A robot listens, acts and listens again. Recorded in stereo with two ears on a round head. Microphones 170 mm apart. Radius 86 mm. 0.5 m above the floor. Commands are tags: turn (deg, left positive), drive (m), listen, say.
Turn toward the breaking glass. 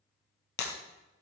<turn deg="60"/>
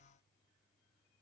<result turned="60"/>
<listen/>
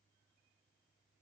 <say>I heard breaking glass, but can't make it out now. It was about straight ahead or 60° left.</say>